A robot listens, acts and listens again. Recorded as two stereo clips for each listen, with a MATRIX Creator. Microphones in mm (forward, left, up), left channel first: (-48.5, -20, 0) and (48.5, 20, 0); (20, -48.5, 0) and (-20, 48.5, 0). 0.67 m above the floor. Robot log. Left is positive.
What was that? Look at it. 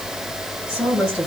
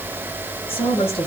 note: The woman speaking: 90° right.
cmd yaw -90
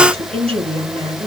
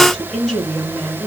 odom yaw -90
note: The woman speaking is now 15° left.
cmd yaw +15
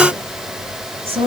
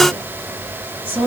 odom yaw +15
end: Found it: a woman speaking, straight ahead, over 4 m away.